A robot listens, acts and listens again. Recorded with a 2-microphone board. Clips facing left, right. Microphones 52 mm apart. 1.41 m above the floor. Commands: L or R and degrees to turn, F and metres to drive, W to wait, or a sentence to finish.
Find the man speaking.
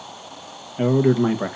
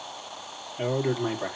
L35
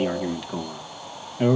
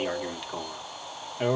Found it: a man speaking, straight ahead, 1 to 2 m away.